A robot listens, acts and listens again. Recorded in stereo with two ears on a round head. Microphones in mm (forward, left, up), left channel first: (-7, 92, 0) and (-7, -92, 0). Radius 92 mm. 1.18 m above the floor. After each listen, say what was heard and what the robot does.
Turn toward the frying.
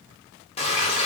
The frying: about 30° left or 150° left. Turn 30° left.
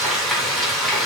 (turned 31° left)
Found it: frying, straight ahead, under 1 m away.